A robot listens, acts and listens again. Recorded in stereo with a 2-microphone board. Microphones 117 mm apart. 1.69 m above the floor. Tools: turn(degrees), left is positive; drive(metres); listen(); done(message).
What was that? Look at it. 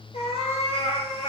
turn(degrees=65)
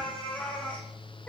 turn(degrees=15)
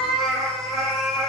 done("Found it: a cat meowing, straight ahead, over 4 m away.")